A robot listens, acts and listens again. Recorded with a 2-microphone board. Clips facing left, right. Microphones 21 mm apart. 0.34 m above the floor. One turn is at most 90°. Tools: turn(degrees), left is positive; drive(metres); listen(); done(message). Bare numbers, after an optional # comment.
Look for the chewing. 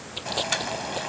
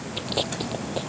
turn(-30)
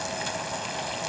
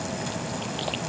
listen()
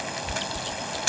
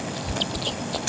# So it is at 140° right.
turn(-90)
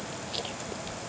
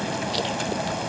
# The chewing is now 20° right.
turn(-20)
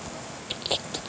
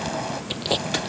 done("Found it: chewing, straight ahead.")